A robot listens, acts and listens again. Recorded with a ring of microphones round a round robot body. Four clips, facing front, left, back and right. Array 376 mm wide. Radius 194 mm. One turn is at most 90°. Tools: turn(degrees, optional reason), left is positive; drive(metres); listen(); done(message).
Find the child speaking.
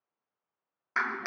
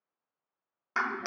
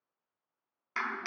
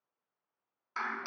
listen()
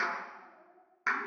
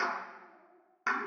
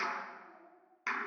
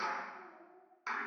turn(degrees=-90, reason="The child speaking: 90° right.")
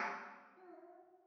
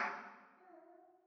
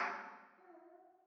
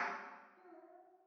turn(degrees=-30, reason="The child speaking is now 30° right.")
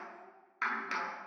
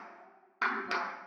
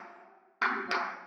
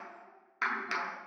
listen()
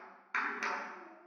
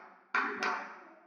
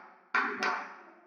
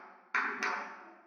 listen()
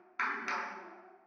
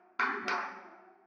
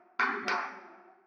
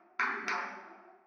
turn(degrees=10, reason="The child speaking is now 10° left.")
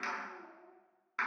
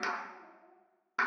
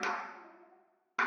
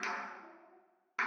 done("Facing the child speaking, over 4 m away.")